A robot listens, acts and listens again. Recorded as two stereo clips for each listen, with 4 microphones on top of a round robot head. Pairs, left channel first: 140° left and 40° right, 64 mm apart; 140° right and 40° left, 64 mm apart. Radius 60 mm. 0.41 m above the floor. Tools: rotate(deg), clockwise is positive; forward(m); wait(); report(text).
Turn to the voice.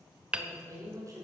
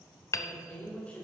rotate(70)
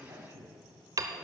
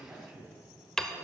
rotate(15)
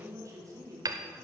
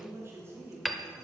rotate(10)
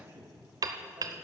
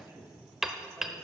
report("Facing the woman speaking, 2 to 4 m away.")